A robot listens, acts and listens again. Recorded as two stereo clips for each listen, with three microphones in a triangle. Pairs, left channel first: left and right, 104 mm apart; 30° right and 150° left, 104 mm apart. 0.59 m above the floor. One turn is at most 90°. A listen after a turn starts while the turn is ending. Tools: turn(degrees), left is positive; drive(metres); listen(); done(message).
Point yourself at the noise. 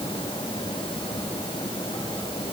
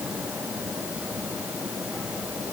listen()
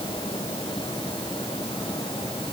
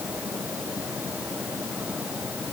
listen()
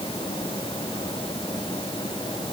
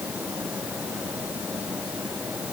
done("I can't make out anything.")